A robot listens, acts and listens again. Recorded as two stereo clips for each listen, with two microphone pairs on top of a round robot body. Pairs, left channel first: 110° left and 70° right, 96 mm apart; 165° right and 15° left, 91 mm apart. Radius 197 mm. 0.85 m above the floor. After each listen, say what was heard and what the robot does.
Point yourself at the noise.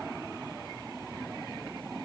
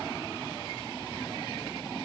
Keep listening.
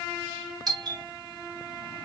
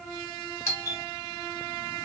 The doorbell: 110° right. Turn 110° right.
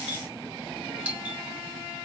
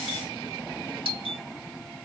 Facing the doorbell.